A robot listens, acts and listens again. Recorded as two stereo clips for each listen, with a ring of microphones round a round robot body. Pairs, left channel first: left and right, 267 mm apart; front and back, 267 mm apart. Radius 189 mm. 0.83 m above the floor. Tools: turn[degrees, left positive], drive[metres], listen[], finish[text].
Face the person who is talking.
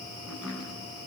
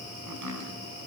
Action: listen[]
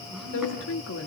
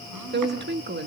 Thought: The woman speaking: 135° left.
Action: turn[135]
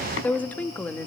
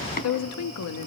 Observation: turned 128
Action: finish[Facing the woman speaking, 1 to 2 m away.]